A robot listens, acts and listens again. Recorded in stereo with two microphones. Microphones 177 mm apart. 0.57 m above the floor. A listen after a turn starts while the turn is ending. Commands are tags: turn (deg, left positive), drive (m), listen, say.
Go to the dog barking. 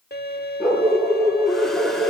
<turn deg="-30"/>
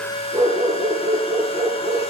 <turn deg="-145"/>
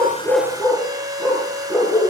<turn deg="25"/>
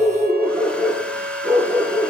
<drive m="1.0"/>
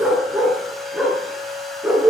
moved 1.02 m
<drive m="1.0"/>
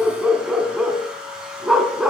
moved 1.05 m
<drive m="1.0"/>
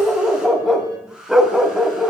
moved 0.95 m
<drive m="1.0"/>
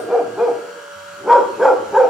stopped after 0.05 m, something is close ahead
<say>Arrived at the dog barking, straight ahead.</say>